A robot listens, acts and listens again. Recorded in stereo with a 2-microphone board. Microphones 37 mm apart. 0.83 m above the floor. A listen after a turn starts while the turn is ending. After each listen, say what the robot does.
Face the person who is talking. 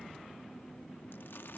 Keep listening.
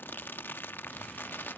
Keep listening.
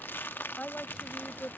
Turn 35° left.
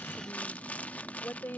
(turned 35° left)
Turn 100° left.
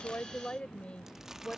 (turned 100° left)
Turn 30° left.
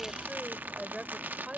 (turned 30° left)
Turn 20° right.
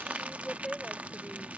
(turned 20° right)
Facing the woman speaking.